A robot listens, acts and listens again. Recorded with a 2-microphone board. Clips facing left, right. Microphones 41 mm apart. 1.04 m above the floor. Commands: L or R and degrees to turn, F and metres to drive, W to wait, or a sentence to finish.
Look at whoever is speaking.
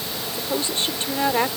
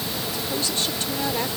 L30
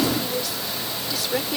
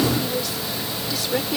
Facing the woman speaking.